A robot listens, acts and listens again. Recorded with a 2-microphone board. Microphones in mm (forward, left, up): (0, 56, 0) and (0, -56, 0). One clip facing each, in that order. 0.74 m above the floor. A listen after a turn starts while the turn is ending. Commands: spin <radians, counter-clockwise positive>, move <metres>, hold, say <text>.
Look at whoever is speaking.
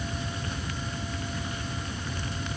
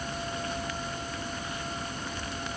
hold
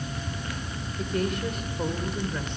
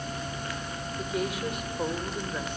spin -0.52
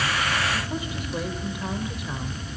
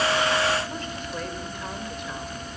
say Facing the woman speaking, 2 to 4 m away.